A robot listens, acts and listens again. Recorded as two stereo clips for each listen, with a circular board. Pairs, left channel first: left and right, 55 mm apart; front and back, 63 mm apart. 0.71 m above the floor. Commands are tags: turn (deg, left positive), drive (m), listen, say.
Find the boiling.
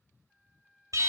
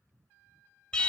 <listen/>
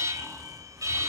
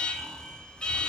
<listen/>
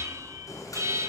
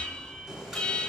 <turn deg="105"/>
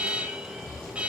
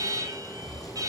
<turn deg="15"/>
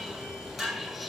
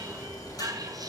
<say>Found it: boiling, straight ahead.</say>